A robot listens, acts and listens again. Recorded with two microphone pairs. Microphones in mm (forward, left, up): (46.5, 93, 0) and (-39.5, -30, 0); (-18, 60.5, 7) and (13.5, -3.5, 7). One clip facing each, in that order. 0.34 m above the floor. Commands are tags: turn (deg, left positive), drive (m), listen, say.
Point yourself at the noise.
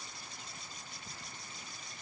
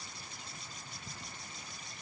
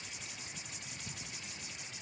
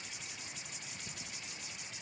<listen/>
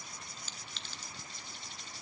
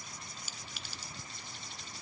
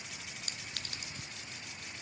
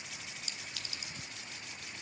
<turn deg="155"/>
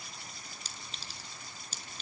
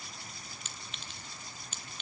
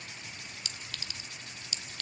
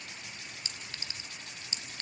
<say>Found it: a clink, straight ahead, 2 to 4 m away.</say>